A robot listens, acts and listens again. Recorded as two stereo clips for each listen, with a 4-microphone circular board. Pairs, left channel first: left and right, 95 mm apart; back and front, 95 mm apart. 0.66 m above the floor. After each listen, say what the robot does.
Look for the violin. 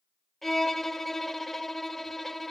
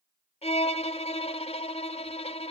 Turn 175° left.
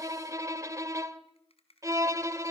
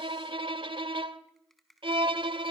Turn 30° right.
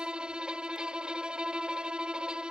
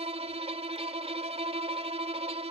Turn 10° right.
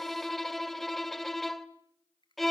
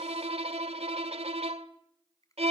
Facing the violin, 1 to 2 m away.